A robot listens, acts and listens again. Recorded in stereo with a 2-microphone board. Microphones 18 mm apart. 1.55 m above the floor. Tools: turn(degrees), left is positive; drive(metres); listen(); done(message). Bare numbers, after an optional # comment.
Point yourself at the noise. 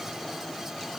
listen()
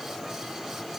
listen()
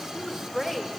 # The woman speaking: about 20° left or 160° left.
turn(20)
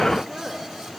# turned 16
listen()
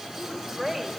turn(30)
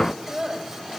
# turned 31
# So it is at 30° right.
turn(-30)
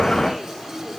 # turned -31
listen()
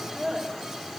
done("Found it: a woman speaking, straight ahead, over 4 m away.")